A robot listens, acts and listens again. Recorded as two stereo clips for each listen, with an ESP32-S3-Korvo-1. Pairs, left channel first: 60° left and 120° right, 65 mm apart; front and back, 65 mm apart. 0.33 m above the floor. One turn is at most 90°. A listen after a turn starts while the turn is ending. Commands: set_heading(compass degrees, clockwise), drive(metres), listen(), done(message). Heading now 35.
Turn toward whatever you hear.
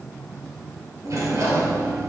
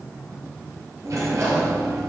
set_heading(125)
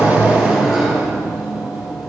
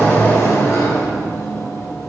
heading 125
set_heading(160)
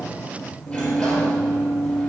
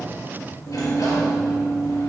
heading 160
set_heading(170)
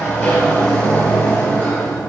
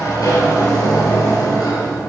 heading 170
done("Found it: a sliding door, straight ahead.")